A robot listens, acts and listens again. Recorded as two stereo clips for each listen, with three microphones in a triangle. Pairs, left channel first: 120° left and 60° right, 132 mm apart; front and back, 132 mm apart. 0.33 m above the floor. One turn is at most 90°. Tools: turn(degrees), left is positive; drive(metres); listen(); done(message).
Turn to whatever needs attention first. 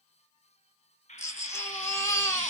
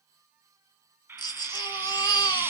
turn(degrees=55)
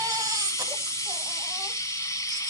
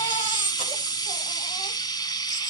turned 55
done("Found it: a baby crying, straight ahead.")